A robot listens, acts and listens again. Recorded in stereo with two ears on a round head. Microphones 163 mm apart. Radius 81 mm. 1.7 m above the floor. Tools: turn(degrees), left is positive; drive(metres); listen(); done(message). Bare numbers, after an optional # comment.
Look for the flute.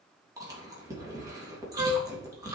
# The flute: about 30° right or 150° right.
turn(-30)
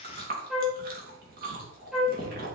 done("Facing the flute, 1 to 2 m away.")